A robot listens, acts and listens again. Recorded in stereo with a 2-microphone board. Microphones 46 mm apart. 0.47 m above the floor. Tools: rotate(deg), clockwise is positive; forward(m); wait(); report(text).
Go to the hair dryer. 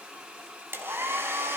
rotate(55)
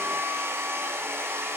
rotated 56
rotate(65)
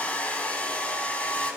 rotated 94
rotate(-30)
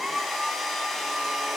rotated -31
forward(1.0)
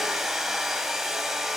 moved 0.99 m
forward(1.0)
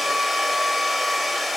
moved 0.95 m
forward(1.0)
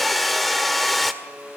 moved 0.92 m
forward(1.0)
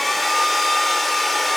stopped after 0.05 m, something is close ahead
report("I am next to the hair dryer.")